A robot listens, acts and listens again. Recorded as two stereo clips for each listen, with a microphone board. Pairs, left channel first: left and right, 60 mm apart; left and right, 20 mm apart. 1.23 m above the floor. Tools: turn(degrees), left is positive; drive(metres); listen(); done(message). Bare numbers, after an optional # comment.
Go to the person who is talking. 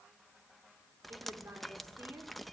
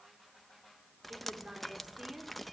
# The woman speaking: about 40° right or 140° right.
turn(-40)
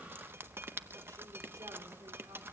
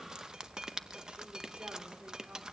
listen()
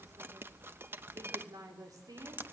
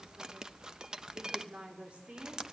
# So it is at 95° right.
turn(-95)
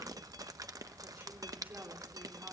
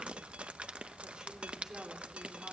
# The woman speaking is now 35° right.
turn(-35)
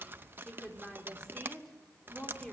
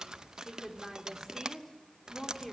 # The woman speaking is now 10° left.
turn(10)
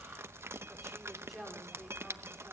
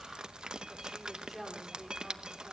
drive(1.0)
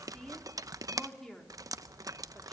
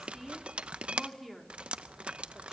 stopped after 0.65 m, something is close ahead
done("Something is in my way. I am facing the woman speaking but have not reached it.")